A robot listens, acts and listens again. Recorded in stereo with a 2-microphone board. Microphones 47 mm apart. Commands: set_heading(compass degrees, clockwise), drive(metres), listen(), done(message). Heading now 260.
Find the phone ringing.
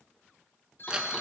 set_heading(205)
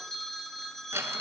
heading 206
set_heading(196)
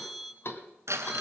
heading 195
done("Found it: a phone ringing, straight ahead.")